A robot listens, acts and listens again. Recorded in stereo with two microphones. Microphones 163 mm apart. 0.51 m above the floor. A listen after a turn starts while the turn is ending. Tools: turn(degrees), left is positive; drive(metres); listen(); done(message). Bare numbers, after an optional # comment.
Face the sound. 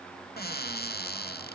# The cupboard door: about 65° left or 115° left.
turn(65)
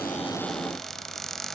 done("Found it: a cupboard door, straight ahead.")